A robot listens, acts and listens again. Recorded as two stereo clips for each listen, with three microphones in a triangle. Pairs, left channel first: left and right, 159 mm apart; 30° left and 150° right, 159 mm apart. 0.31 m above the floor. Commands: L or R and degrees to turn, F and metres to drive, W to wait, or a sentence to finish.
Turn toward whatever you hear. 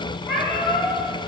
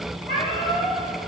L180
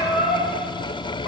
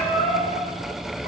L70
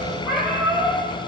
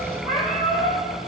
Found it: a cat meowing, straight ahead, over 4 m away.